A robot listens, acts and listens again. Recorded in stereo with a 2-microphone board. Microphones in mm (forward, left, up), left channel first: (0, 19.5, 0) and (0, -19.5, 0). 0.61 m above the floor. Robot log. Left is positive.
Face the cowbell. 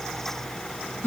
cmd idle
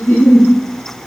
cmd idle
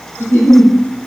end: I can't make out a cowbell, only a giggle.